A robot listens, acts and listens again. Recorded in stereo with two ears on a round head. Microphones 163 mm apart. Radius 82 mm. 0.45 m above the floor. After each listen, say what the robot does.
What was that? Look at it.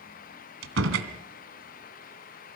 Turn 90° right.
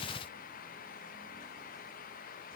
Facing where the door slam came from. I can't hear it now.